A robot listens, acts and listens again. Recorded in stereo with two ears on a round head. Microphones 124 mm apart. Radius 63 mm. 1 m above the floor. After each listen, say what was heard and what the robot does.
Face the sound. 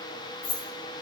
The keys jangling: about 75° left or 105° left. Turn 75° left.
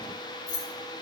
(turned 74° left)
So it is at 50° left. Turn 50° left.
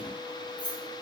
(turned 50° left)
The keys jangling is now 10° left. Turn 10° left.
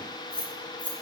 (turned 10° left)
The keys jangling is now 10° left. Turn 10° left.
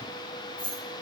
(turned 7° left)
The keys jangling is now 10° left. Turn 10° left.
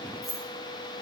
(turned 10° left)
Found it: keys jangling, straight ahead.